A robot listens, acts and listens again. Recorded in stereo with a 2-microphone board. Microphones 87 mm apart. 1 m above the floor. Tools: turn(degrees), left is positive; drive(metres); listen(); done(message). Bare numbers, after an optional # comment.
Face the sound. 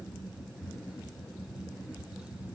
listen()
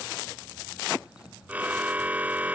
# The car horn: about 15° right or 165° right.
turn(-15)
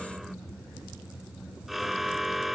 done("Found it: a car horn, straight ahead.")